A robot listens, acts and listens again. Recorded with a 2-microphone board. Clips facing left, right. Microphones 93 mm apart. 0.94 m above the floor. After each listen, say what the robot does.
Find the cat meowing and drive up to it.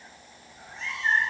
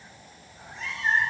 Turn 30° left.
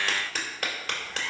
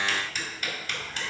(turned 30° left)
Keep listening.
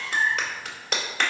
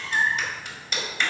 Turn 30° right.
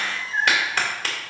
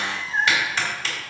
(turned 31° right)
Drive 1.0 m forward.
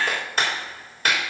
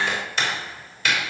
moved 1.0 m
Keep listening.
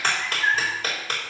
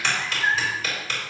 Drive 1.0 m forward.
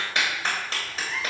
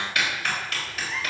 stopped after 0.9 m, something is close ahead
Arrived at the cat meowing, straight ahead.